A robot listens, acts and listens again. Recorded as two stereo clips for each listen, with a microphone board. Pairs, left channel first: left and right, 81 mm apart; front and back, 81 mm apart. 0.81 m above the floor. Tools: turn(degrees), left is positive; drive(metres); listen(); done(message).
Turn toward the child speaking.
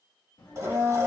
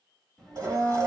turn(degrees=85)
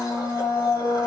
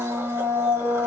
listen()
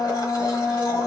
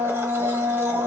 listen()
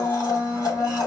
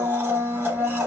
done("Facing where the child speaking came from. I can't hear it now.")